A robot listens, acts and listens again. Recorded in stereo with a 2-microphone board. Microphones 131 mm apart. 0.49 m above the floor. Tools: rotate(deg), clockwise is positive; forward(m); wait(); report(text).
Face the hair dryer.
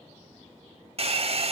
rotate(50)
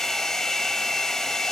report("Facing the hair dryer.")